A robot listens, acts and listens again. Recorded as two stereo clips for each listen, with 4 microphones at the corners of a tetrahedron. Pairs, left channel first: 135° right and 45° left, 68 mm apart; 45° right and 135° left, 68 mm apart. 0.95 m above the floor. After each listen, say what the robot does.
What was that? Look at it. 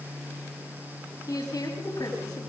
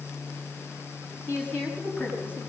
Turn 105° right.
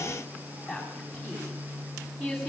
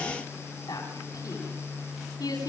Turn 45° right.
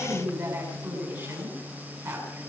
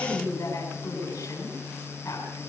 Found it: a woman speaking, straight ahead, over 4 m away.